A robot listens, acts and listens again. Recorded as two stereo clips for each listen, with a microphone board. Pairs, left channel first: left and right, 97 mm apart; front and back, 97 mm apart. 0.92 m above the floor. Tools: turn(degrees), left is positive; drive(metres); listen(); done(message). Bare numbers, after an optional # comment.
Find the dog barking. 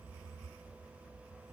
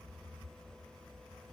listen()
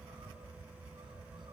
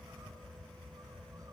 listen()
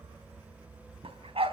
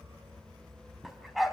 # The dog barking: 90° right.
turn(-90)
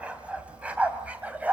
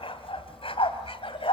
# The dog barking is now 15° right.
turn(-15)
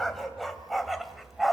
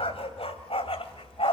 done("Facing the dog barking.")